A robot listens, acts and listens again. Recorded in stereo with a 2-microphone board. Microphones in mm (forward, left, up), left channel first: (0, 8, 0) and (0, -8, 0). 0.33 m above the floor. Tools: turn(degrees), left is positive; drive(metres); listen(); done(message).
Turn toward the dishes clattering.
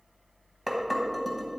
turn(degrees=30)
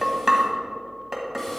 turn(degrees=-30)
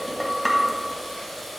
done("Facing the dishes clattering.")